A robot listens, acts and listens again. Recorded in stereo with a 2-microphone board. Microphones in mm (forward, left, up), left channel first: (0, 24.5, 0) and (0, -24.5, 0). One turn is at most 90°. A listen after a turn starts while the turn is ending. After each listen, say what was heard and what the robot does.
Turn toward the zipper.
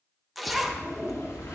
Turn 30° left.
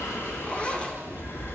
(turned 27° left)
So it is at 150° left. Turn 90° left.
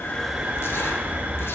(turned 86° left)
Nothing new. It was at 65° left. Turn 65° left.
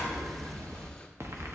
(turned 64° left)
Keep listening.
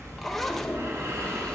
Found it: a zipper, straight ahead.